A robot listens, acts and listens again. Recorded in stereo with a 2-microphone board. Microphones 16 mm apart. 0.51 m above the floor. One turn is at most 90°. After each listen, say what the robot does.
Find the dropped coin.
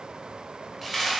Turn 30° right.
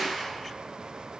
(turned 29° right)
Turn 90° right.
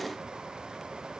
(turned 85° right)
Turn 60° right.
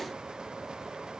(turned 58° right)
Facing where the dropped coin came from. I can't hear it now.